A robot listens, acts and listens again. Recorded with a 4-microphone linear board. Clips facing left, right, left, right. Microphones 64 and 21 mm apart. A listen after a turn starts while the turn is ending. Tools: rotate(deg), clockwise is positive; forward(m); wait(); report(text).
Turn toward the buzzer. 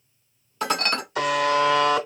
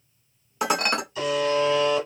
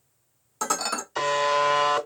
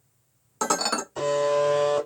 rotate(-90)
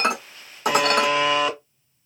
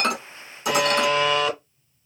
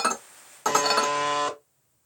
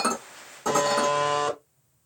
rotate(-10)
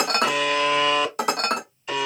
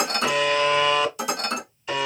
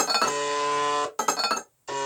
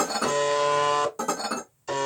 report("Facing the buzzer, under 1 m away.")